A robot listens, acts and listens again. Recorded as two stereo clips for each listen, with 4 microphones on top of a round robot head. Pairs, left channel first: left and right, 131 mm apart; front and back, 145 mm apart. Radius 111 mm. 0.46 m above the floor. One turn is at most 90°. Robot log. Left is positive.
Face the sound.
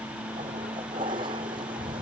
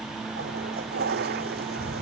note: The toilet flushing: 155° right.
cmd yaw -90
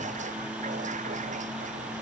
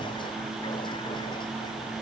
note: Nothing new. It was at 65° right.
cmd yaw -65
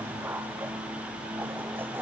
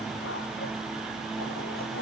cmd idle
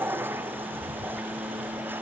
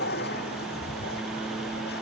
note: The toilet flushing is now 15° right.
cmd yaw -15
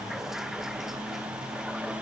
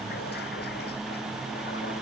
cmd idle
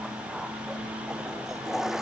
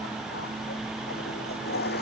end: Found it: a toilet flushing, straight ahead.